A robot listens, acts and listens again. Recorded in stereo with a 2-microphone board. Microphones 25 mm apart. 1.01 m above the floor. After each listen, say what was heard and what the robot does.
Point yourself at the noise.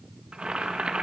The boiling: about 45° right or 135° right. Turn 45° right.
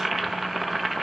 Found it: boiling, straight ahead.